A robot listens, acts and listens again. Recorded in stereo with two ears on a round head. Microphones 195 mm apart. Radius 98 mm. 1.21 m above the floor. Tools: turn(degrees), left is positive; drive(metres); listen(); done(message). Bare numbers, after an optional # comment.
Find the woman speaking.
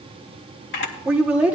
turn(-30)
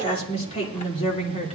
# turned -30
# So it is at 30° left.
turn(30)
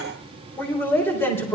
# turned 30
# The woman speaking is now 10° left.
turn(10)
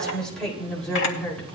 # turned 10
done("Found it: a woman speaking, straight ahead, over 4 m away.")